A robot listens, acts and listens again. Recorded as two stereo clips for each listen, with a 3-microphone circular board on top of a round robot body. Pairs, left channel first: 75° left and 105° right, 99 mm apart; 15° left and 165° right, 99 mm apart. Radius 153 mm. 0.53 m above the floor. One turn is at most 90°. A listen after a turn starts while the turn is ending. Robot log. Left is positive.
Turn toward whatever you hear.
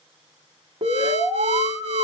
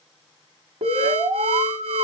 note: The alarm: 140° right.
cmd yaw -90
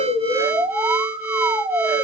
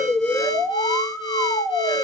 note: The alarm is now 35° right.
cmd yaw -35
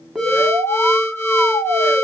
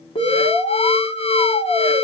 end: Facing the alarm, 1 to 2 m away.